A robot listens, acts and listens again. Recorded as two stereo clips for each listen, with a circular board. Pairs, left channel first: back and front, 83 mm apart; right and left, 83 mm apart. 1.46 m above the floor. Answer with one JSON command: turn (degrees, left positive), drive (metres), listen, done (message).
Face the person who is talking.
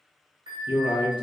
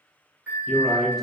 {"turn": -175}
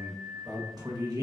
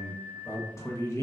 {"turn": -35}
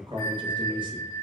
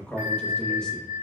{"turn": -10}
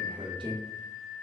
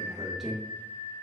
{"done": "Facing the man speaking, 1 to 2 m away."}